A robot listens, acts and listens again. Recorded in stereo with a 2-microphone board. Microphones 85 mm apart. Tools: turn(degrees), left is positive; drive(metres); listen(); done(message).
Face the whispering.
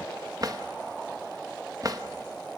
listen()
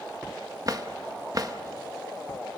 listen()
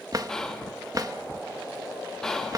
turn(degrees=30)
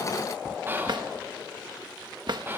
turn(degrees=-25)
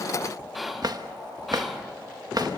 done("Facing the whispering, 1 to 2 m away.")